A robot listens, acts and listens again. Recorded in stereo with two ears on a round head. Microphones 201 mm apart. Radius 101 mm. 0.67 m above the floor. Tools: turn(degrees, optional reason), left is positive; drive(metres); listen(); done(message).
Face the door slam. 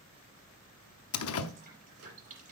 turn(degrees=70, reason="The door slam: about 70° left or 110° left.")
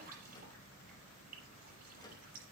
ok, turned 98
listen()
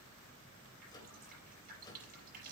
done("I heard a door slam, but can't make it out now. It was about 10° left or 25° right.")